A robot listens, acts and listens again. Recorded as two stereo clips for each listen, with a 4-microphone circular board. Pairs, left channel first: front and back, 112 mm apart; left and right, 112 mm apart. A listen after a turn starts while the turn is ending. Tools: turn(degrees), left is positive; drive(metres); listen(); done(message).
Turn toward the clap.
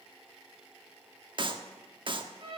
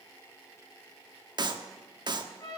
turn(degrees=-135)
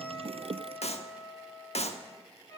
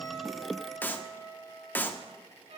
turn(degrees=15)
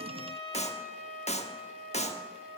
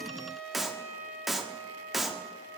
done("Found it: a clap, straight ahead.")